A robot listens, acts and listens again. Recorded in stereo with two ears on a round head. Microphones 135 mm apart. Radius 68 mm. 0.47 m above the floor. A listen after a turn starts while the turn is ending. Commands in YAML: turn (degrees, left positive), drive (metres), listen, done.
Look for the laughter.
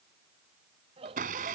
turn: -40
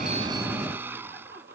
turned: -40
listen: true
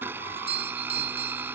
listen: true
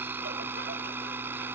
done: "I heard laughter, but can't make it out now. It was about straight ahead or 100° right."